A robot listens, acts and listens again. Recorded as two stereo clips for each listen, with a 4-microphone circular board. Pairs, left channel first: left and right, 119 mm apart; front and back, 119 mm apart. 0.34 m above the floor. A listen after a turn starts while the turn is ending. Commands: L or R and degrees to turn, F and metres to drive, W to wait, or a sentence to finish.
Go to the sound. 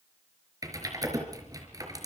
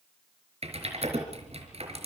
R150
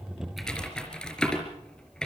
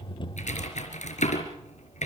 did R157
F1.0
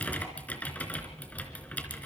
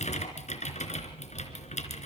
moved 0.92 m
L15
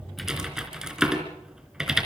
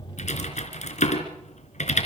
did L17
F1.0
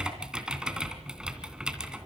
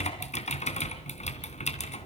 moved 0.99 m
F1.0
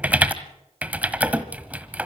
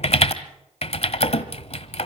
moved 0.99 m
R15
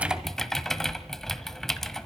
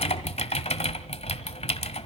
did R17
F1.0
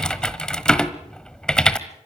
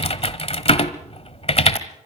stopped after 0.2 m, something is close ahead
L10
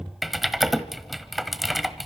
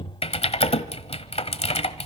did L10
I am next to the typing on a keyboard.